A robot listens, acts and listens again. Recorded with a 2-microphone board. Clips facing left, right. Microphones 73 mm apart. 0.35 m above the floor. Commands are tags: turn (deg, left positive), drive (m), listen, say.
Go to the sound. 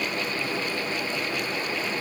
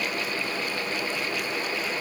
<listen/>
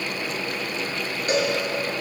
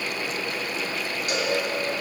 <turn deg="45"/>
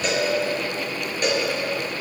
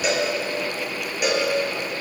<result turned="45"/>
<drive m="1.0"/>
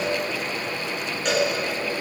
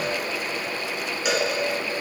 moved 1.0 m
<drive m="1.0"/>
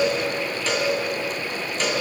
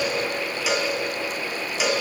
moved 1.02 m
<drive m="1.0"/>
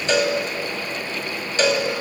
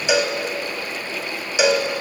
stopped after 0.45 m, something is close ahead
<turn deg="-10"/>
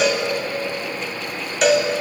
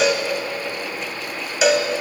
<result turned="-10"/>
<say>I am next to the cowbell.</say>